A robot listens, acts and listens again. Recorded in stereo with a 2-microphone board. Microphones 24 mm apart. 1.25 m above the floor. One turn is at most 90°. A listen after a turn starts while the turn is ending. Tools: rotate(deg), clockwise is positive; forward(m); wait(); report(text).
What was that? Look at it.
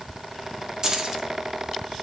rotate(30)
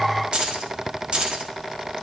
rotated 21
rotate(90)
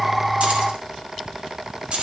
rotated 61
rotate(65)
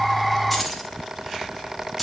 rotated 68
report("Found it: keys jangling, straight ahead.")